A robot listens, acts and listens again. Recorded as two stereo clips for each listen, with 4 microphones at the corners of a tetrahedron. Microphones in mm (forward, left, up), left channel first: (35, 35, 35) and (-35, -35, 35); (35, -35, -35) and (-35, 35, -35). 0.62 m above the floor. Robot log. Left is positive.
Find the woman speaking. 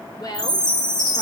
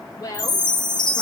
end: Found it: a woman speaking, straight ahead.